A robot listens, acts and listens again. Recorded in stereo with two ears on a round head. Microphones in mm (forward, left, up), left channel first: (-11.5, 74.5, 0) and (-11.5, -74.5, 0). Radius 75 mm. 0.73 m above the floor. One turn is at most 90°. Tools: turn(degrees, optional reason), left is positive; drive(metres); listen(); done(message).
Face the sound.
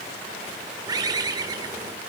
turn(degrees=-25, reason="The bird: about 25° right or 155° right.")
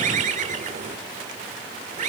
turn(degrees=-90, reason="So it is at 130° right.")
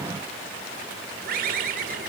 turn(degrees=-55, reason="The bird is now 55° right.")
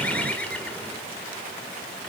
turn(degrees=10, reason="The bird is now 10° left.")
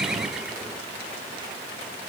listen()
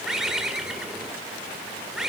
done("Found it: a bird, straight ahead.")